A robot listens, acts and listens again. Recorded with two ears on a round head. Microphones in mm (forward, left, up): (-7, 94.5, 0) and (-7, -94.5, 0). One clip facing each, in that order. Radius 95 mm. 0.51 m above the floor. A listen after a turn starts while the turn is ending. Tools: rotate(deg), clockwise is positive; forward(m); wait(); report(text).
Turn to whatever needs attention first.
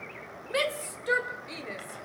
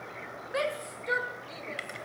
rotate(-40)
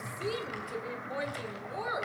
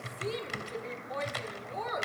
rotate(-10)
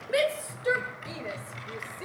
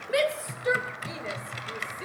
report("Facing the shout, 2 to 4 m away.")